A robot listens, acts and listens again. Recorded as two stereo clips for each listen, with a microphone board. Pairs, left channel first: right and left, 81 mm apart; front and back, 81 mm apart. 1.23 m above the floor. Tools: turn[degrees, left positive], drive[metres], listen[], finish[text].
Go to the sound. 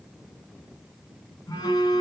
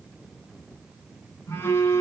Thought: The phone buzzing: 55° right.
Action: turn[-55]
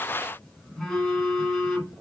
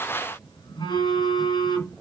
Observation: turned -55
Action: drive[1.0]
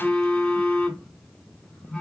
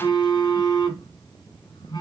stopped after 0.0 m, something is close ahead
Action: finish[Something is in my way. I am facing the phone buzzing but have not reached it.]